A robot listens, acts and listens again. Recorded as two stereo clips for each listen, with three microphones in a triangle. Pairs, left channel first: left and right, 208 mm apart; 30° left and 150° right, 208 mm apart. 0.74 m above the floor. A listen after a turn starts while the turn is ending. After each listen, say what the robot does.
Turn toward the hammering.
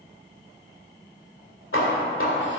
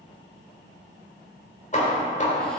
Turn 80° left.
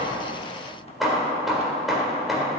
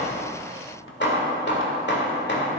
Found it: hammering, straight ahead, 1 to 2 m away.